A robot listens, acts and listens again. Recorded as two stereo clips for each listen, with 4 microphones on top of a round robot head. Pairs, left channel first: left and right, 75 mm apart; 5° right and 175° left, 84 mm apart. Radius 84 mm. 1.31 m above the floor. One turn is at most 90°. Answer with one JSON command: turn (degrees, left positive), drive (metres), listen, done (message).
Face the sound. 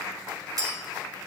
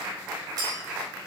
{"turn": -90}
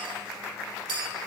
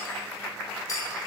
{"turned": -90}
{"turn": -60}
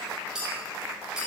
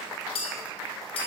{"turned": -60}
{"turn": -10}
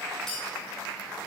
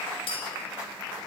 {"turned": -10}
{"done": "Facing the clink, 2 to 4 m away."}